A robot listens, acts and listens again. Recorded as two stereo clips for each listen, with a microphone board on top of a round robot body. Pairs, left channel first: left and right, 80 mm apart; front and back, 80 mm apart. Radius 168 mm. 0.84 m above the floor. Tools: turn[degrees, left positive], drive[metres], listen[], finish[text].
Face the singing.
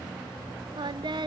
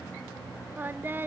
Thought: The singing: 115° right.
Action: turn[-115]
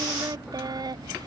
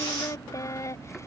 Thought: The singing is now 55° right.
Action: turn[-55]
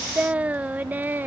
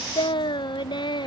Thought: The singing is now 25° right.
Action: turn[-25]
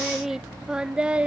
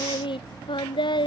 Thought: The singing is now 15° right.
Action: turn[-15]
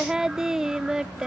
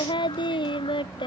Action: finish[Facing the singing.]